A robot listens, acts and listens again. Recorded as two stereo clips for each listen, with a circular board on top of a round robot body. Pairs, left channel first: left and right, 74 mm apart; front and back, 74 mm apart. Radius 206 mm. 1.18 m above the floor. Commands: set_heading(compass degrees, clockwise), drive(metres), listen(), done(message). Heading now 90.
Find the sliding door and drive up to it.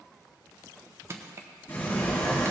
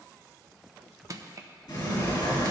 set_heading(60)
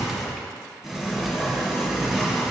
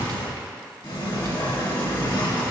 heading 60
drive(1.0)
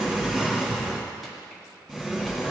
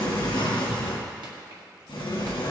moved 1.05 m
set_heading(70)
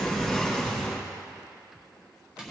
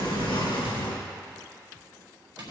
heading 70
drive(1.0)
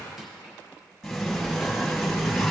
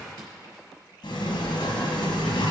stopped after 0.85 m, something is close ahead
done("I am next to the sliding door.")